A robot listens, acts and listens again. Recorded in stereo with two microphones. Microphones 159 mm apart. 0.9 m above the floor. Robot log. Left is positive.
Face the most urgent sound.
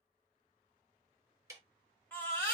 cmd yaw +30
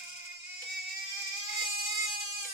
note: So it is at 135° left.
cmd yaw +135
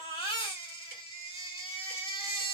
note: The baby crying is now 40° left.
cmd yaw +40
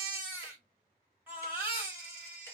note: The baby crying is now 15° right.
cmd yaw -15
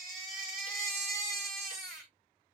end: Found it: a baby crying, straight ahead, 1 to 2 m away.